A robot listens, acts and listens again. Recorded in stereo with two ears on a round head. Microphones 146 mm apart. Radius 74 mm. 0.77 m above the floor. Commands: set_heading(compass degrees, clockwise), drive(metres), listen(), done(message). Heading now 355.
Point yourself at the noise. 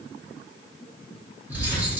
set_heading(25)
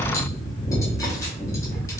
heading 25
set_heading(5)
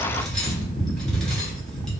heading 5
done("Found it: cutlery clinking, straight ahead, under 1 m away.")